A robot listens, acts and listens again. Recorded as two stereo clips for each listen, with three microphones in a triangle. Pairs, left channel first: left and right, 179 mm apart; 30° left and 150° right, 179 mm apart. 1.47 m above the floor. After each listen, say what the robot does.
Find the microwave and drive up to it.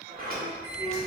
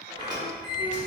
Turn 15° right.
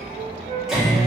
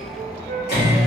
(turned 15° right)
Drive 1.0 m forward.
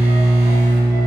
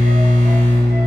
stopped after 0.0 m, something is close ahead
Blocked. The microwave is further on, straight ahead.